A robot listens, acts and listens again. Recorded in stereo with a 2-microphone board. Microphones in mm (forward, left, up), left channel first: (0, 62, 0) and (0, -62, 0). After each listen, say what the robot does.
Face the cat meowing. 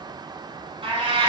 Turn 45° right.
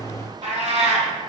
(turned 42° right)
Turn 80° right.
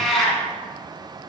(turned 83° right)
Found it: a cat meowing, straight ahead.